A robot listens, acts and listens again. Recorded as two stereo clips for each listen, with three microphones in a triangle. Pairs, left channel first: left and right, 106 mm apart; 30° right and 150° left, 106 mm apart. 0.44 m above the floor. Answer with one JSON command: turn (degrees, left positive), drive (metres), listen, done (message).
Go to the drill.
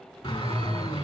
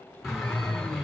{"turn": 60}
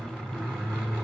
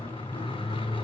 {"drive": 1.0}
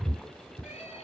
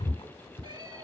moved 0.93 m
{"turn": 10}
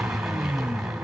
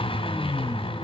{"drive": 1.0}
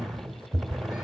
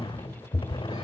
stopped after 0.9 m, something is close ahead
{"done": "I am next to the drill."}